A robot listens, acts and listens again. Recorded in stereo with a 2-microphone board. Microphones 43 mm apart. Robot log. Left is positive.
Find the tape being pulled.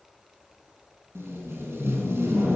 note: The tape being pulled: about 70° right or 110° right.
cmd yaw -70
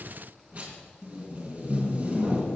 note: So it is at 35° right.
cmd yaw -35
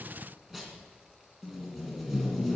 end: Found it: tape being pulled, straight ahead.